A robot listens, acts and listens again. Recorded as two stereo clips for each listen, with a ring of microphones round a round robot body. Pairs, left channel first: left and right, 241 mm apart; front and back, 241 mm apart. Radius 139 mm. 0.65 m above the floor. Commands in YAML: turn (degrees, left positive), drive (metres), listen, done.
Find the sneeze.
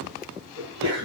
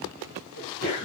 turn: -45
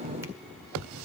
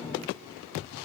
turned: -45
done: "Facing where the sneeze came from. I can't hear it now."